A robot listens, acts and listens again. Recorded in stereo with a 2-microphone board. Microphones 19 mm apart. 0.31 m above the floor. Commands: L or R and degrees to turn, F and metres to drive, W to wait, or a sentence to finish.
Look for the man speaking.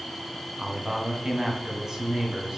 R35
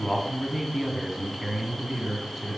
R25
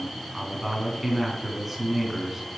R10
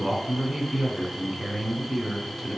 Found it: a man speaking, straight ahead.